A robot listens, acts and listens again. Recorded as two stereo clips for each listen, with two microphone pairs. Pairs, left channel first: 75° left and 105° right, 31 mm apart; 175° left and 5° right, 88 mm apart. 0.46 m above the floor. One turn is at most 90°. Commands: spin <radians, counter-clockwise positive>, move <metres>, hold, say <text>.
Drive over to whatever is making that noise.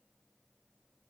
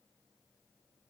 hold
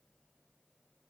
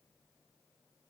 hold
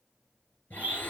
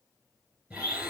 spin 1.22
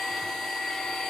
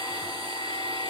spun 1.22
move 1.0
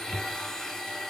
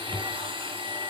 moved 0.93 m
move 1.0
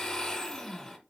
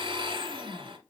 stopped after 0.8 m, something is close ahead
say Arrived at the blender, straight ahead.